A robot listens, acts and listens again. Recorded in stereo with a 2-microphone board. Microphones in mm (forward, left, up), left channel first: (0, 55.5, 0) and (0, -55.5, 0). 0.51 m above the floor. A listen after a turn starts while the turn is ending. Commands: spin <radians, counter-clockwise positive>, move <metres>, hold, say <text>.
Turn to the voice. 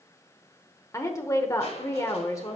spin 0.44
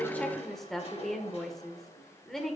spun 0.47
say Found it: a woman speaking, straight ahead.